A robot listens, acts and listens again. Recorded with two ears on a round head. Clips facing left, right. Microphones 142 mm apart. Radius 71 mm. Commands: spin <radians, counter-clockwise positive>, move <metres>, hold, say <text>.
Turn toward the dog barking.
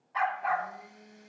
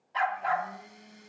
spin -0.70
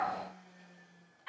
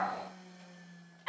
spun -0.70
spin -1.75
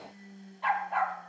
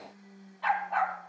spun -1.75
say Found it: a dog barking, straight ahead, 2 to 4 m away.